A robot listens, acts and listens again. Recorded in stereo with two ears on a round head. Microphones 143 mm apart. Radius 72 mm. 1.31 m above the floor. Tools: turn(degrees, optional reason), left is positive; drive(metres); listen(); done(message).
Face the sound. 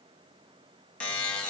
turn(degrees=30)
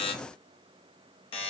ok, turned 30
turn(degrees=140, reason="So it is at 140° left.")
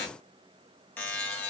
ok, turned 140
turn(degrees=10, reason="The buzzer is now 10° left.")
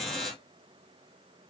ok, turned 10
done("Facing the buzzer, under 1 m away.")